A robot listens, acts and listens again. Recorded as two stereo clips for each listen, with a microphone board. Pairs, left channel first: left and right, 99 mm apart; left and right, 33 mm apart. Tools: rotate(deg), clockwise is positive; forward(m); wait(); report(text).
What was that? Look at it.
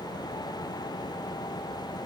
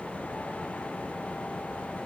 wait()
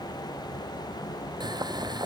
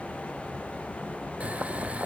rotate(45)
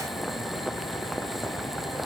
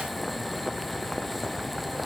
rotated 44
report("Found it: boiling, straight ahead.")